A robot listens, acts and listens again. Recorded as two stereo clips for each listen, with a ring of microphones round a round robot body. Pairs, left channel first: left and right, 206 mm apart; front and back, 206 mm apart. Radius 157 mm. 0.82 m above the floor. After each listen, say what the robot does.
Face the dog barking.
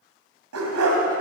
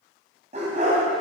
Turn 110° right.
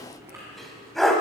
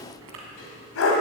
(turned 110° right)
Found it: a dog barking, straight ahead.